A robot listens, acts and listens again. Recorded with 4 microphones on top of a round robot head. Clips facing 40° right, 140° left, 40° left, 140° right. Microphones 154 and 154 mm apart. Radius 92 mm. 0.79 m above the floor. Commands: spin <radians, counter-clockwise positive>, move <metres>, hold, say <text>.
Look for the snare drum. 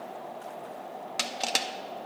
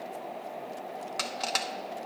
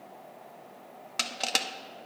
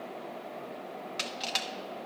hold
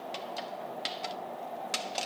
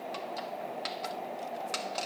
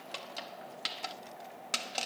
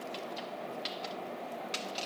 hold
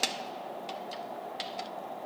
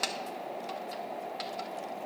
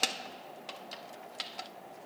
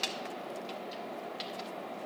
say I can't make out a snare drum, only crushing.